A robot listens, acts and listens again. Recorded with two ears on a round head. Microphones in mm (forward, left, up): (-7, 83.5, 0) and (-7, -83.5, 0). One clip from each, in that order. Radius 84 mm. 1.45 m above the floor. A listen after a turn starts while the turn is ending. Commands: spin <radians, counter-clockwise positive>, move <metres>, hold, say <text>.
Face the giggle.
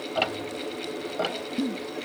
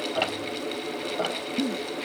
spin -0.79
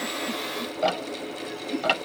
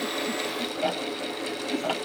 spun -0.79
spin -1.48
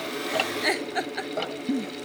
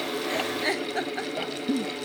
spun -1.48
spin 0.26
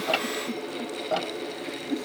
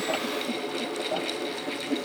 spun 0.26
say Found it: a giggle, straight ahead.